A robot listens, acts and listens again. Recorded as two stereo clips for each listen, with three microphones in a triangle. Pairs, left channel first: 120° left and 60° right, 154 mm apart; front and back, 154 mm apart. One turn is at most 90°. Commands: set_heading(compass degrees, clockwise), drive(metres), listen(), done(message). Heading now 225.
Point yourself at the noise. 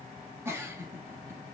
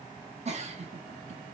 set_heading(315)
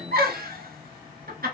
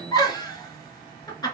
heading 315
set_heading(20)
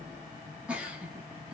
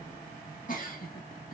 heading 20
set_heading(355)
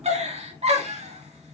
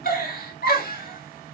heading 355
set_heading(10)
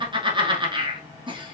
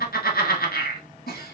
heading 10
done("Facing the giggle.")